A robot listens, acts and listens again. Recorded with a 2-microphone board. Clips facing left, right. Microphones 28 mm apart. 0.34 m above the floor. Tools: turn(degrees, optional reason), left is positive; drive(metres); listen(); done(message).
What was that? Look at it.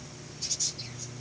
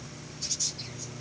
listen()
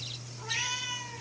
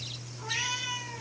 turn(degrees=-30)
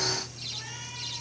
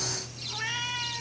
turn(degrees=-135, reason="So it is at 135° right.")
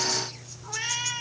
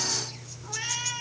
turn(degrees=15, reason="The cat meowing is now 15° left.")
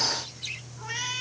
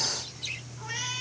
turn(degrees=10, reason="The cat meowing is now 10° left.")
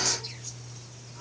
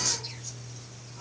listen()
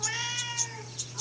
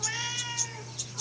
done("Found it: a cat meowing, straight ahead.")